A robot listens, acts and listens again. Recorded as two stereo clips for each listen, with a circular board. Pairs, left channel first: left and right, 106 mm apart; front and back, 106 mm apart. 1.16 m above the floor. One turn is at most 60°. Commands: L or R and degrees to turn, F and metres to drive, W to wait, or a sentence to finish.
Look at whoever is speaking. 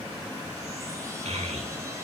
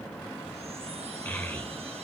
R60
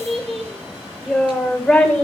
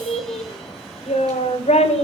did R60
L10
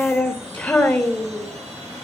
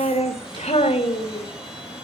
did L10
L15
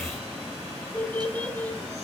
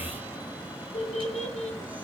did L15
L10
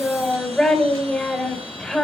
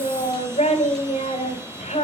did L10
Found it: a child speaking, straight ahead.